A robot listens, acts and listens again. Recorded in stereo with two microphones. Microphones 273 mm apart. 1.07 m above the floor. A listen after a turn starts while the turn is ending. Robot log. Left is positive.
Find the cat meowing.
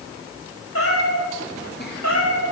note: The cat meowing: about 75° left or 105° left.
cmd yaw +75
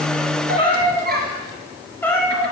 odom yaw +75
end: Found it: a cat meowing, straight ahead, 2 to 4 m away.